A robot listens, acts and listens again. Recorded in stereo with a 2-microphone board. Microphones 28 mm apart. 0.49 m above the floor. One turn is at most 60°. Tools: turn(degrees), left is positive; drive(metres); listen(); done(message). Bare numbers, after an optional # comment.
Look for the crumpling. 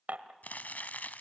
turn(60)
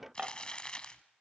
# So it is at 35° left.
turn(35)
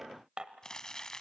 # The crumpling is now 25° left.
turn(25)
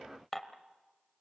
listen()
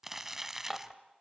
# The crumpling is now 10° right.
turn(-10)
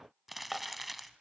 done("Facing the crumpling.")